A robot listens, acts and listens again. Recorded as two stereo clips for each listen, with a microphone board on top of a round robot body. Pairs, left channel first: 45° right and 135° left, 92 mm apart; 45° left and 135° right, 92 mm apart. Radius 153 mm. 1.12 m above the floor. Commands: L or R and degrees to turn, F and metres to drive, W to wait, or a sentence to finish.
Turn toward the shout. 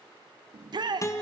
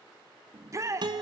L170
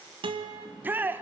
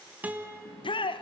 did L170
L65
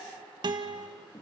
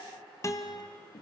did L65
W
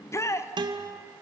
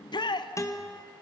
L15
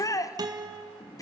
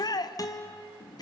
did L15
Found it: a shout, straight ahead.